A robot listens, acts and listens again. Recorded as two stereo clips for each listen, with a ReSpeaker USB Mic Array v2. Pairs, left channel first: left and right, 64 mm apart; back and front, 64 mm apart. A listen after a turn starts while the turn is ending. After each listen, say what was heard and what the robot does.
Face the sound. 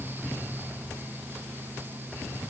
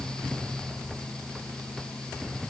Keep listening.
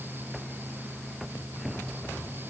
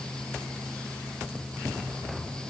Keep listening.
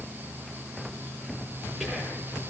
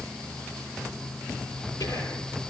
The whispering: 175° right. Turn 175° right.
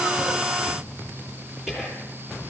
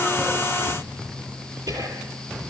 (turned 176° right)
Facing the whispering, over 4 m away.